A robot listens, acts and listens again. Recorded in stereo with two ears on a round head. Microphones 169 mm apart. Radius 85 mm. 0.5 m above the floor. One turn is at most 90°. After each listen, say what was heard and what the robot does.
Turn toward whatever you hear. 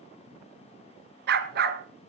The dog barking: about 50° right or 130° right. Turn 50° right.
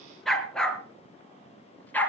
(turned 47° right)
So it is at 10° left. Turn 10° left.
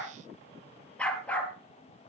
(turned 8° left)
The dog barking is now 10° left. Turn 10° left.
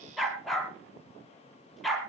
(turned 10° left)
Found it: a dog barking, straight ahead.